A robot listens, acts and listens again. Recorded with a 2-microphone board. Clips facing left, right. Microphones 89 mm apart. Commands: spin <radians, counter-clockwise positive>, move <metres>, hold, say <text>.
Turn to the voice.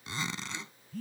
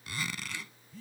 hold
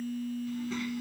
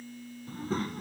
spin -0.70
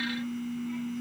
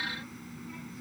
hold
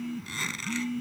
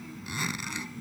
say Facing the child speaking.